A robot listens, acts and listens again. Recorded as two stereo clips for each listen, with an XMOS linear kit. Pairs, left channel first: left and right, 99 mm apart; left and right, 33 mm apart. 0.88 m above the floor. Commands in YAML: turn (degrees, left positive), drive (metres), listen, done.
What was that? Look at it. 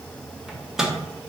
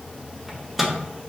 turn: -30
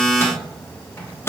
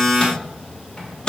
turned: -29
turn: 25
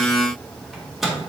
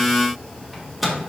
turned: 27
done: "Facing the microwave."